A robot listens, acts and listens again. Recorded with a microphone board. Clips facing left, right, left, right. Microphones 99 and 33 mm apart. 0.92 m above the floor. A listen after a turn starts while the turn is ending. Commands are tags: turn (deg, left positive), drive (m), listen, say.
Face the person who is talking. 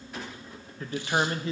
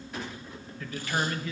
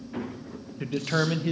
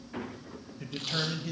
<turn deg="35"/>
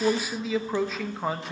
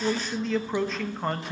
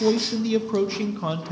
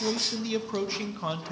<say>Facing the man speaking, under 1 m away.</say>